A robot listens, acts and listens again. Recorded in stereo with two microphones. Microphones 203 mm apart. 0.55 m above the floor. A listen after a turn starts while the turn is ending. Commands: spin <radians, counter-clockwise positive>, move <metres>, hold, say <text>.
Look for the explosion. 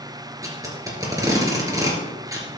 hold
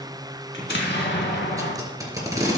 spin 1.13
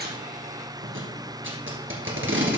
hold
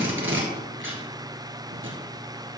say I heard an explosion, but can't make it out now. It was about straight ahead or 50° left.